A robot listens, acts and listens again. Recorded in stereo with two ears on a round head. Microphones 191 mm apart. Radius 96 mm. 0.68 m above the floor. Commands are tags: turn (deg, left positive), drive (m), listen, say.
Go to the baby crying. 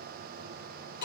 <listen/>
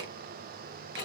<listen/>
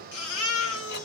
<turn deg="75"/>
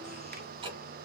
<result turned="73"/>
<listen/>
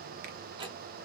<listen/>
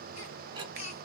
<turn deg="35"/>
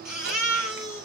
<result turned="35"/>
<drive m="1.0"/>
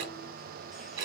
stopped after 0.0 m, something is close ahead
<listen/>
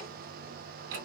<listen/>
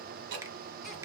<say>I heard a baby crying from this way, but can't make it out now. I did not reach it.</say>